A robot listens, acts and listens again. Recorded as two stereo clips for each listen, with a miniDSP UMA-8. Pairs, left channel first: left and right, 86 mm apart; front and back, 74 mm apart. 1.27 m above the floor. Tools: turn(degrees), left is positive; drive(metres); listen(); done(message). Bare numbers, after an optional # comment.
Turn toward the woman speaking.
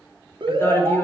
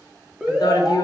# The woman speaking: 25° left.
turn(25)
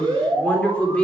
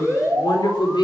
# The woman speaking is now 10° left.
turn(10)
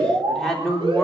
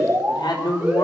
done("Facing the woman speaking, 2 to 4 m away.")